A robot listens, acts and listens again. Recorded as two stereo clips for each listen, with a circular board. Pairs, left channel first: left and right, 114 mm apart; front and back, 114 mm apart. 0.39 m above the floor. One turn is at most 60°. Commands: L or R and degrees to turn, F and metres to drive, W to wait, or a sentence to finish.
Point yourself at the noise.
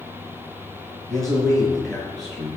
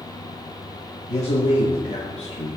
Facing the man speaking.